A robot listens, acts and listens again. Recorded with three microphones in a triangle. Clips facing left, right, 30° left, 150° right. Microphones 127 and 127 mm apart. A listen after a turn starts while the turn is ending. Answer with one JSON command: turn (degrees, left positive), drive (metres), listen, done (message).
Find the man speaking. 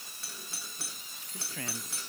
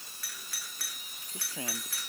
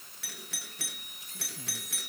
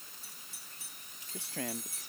{"turn": -160}
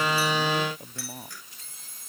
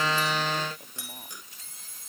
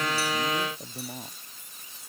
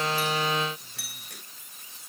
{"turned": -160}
{"listen": true}
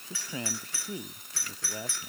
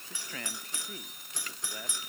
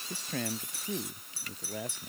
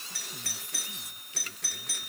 {"turn": 20}
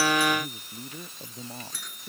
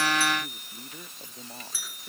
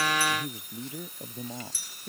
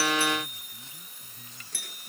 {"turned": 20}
{"done": "Facing the man speaking."}